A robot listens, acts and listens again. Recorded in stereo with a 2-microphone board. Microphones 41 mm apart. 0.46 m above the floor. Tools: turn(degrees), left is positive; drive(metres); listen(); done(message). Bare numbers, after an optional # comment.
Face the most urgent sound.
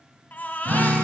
# The baby crying: about 50° left or 130° left.
turn(50)
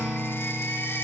# So it is at 85° left.
turn(85)
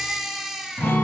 done("Found it: a baby crying, straight ahead.")